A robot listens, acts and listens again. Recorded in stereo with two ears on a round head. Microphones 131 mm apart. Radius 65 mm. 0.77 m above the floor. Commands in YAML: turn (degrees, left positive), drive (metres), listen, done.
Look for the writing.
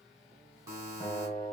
listen: true
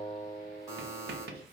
turn: -90
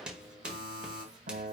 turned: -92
done: "Facing the writing, 1 to 2 m away."